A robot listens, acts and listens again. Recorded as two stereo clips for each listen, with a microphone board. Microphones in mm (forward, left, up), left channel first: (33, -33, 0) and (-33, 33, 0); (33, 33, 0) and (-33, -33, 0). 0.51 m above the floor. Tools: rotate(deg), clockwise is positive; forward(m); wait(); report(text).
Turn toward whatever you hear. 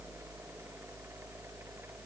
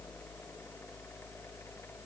wait()
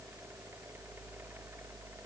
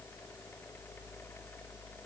wait()
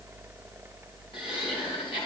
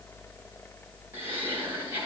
rotate(65)
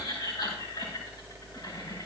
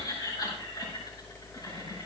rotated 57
report("Facing the laughter.")